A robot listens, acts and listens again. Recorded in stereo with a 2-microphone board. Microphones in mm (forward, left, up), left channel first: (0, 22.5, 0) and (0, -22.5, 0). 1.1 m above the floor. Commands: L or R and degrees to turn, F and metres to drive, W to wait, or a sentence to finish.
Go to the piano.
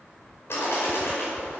W
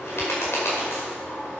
W
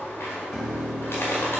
L30
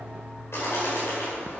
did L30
R25
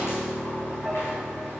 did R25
F1.0
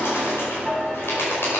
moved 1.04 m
F1.0
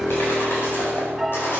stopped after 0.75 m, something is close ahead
Arrived at the piano, straight ahead.